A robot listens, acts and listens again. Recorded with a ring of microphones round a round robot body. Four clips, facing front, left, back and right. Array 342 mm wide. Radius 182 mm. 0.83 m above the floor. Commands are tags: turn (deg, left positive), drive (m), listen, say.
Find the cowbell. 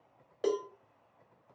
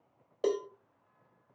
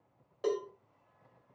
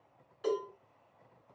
<turn deg="65"/>
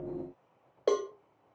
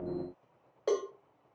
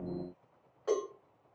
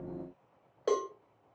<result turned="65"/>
<say>Found it: a cowbell, straight ahead, 1 to 2 m away.</say>